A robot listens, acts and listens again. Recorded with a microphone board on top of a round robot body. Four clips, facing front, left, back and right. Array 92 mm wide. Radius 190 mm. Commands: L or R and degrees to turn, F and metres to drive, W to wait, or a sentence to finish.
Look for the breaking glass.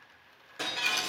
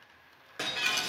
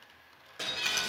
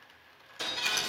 L80
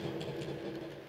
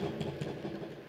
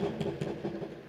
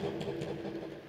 I heard breaking glass from this way, but can't make it out now.